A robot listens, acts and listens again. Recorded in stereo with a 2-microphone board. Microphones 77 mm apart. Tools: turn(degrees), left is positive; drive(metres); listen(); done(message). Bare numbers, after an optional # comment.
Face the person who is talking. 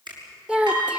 turn(-30)
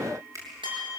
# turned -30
listen()
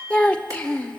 # So it is at 15° left.
turn(15)
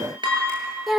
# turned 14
done("Facing the child speaking, under 1 m away.")